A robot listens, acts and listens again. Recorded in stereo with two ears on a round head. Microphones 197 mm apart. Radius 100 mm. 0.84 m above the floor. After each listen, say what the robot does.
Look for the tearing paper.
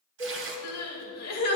Turn 60° right.
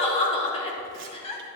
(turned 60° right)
Keep listening.
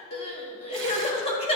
Keep listening.
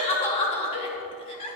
I heard tearing paper, but can't make it out now. It was about straight ahead or 60° right.